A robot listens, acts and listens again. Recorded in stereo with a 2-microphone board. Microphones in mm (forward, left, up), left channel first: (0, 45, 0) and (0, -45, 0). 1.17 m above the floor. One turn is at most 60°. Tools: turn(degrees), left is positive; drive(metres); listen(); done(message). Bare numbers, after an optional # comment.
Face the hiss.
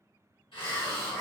# The hiss: about 70° left or 110° left.
turn(60)
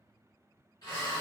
# So it is at 45° left.
turn(45)
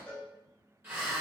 # The hiss is now 20° right.
turn(-20)
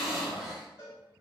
done("Facing the hiss, 1 to 2 m away.")